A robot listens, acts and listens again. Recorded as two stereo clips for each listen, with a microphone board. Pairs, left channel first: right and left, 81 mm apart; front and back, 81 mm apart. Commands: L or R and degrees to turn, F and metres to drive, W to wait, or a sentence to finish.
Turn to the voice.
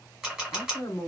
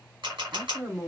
R130
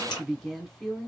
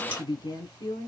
Found it: a woman speaking, straight ahead, 1 to 2 m away.